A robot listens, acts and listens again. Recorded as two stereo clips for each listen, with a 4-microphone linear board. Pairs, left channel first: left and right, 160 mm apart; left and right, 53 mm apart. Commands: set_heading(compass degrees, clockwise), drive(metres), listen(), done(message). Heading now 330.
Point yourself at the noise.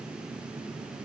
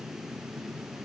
listen()
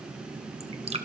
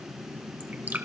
set_heading(10)
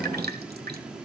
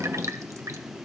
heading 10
set_heading(110)
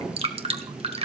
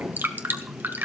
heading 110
set_heading(150)
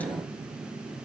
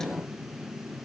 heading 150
listen()
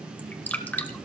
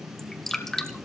set_heading(140)
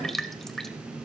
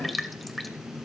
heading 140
done("Facing the dripping, 1 to 2 m away.")